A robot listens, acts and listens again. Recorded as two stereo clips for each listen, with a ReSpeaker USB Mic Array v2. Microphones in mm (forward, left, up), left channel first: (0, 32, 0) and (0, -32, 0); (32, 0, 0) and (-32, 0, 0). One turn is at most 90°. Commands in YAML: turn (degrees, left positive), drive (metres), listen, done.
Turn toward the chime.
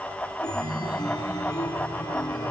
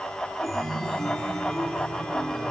turn: 90
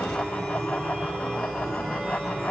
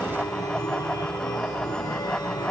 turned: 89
done: "Facing the chime, under 1 m away."